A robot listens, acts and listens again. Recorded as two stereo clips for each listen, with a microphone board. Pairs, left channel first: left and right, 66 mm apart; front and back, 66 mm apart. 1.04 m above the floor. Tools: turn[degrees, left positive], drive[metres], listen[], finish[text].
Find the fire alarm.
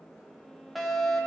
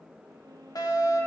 Action: finish[Found it: a fire alarm, straight ahead.]